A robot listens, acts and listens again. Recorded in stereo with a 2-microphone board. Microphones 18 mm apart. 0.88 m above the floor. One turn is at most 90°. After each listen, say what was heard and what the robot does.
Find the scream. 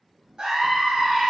The scream: about 55° right or 125° right. Turn 55° right.
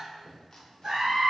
So it is at 60° right. Turn 60° right.
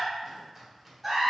Found it: a scream, straight ahead.